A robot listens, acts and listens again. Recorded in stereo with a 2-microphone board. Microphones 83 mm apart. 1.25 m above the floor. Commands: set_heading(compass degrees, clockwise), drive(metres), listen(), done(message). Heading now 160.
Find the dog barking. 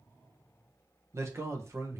listen()
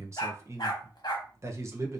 set_heading(110)
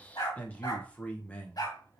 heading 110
set_heading(45)
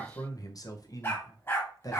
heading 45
set_heading(10)
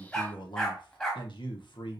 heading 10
set_heading(355)
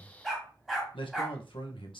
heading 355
done("Facing the dog barking, 1 to 2 m away.")